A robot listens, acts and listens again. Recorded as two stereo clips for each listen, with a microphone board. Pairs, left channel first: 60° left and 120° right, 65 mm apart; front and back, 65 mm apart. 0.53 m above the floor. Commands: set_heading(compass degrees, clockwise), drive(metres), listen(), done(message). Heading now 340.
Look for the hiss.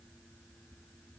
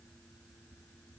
listen()
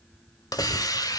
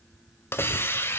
set_heading(290)
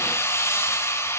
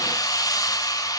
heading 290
set_heading(275)
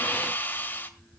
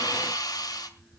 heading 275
done("Facing the hiss.")